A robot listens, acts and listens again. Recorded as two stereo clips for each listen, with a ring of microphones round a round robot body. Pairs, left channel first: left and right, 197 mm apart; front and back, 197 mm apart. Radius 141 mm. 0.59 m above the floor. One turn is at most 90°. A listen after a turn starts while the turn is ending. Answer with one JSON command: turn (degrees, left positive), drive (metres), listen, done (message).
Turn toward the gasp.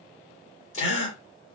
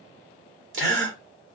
{"turn": 90}
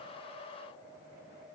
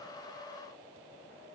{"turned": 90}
{"turn": 65}
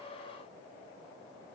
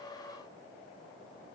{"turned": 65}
{"done": "I heard a gasp from this way, but can't make it out now."}